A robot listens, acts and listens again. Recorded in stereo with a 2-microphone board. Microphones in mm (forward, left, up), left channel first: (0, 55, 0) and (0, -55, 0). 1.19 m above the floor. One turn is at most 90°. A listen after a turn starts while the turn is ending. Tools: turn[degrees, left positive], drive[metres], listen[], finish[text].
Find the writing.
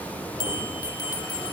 Action: listen[]
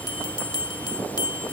Action: listen[]
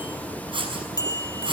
Thought: The writing: about 50° right or 130° right.
Action: turn[-50]
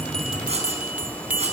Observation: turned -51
Action: listen[]
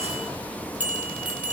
Action: listen[]
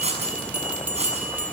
Thought: So it is at 80° right.
Action: turn[-80]
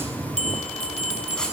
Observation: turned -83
Action: listen[]
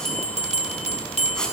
Action: finish[Found it: writing, straight ahead, over 4 m away.]